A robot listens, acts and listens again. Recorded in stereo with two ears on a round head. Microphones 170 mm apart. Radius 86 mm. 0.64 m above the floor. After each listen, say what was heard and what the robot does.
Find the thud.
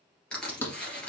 Turn 30° left.
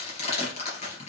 Keep listening.
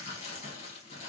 I heard a thud, but can't make it out now. It was about 20° right or 140° left.